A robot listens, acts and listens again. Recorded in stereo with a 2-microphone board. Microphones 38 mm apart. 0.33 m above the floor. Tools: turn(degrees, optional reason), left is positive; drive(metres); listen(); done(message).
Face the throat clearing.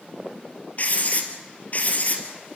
listen()
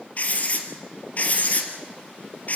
listen()
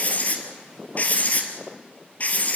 done("I can't make out throat clearing to turn to.")